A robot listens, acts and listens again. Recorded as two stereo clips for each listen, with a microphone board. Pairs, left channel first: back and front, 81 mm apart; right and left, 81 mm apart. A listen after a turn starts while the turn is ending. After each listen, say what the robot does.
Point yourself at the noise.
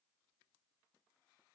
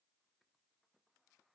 Keep listening.
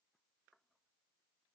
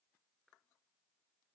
Keep listening.
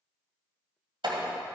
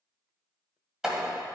Facing the door slam.